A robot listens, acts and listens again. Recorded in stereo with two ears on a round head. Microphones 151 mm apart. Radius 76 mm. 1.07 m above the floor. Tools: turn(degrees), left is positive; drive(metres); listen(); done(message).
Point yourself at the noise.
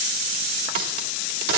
turn(degrees=-60)
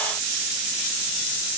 listen()
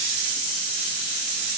done("I heard a crack, but can't make it out now. It was about straight ahead or 60° right.")